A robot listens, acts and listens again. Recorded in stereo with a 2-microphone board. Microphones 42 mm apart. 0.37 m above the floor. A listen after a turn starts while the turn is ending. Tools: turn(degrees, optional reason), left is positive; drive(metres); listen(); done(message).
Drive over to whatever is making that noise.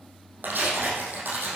turn(degrees=-50, reason="The tearing paper: about 50° right or 130° right.")
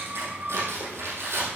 turn(degrees=-80, reason="So it is at 80° right.")
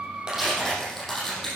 drive(metres=1.0)
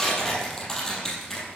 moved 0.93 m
turn(degrees=10, reason="The tearing paper is now 10° left.")
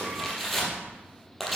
drive(metres=1.0)
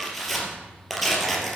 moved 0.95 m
drive(metres=1.0)
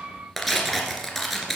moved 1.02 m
drive(metres=1.0)
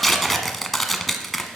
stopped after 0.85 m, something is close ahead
done("Arrived at the tearing paper, straight ahead.")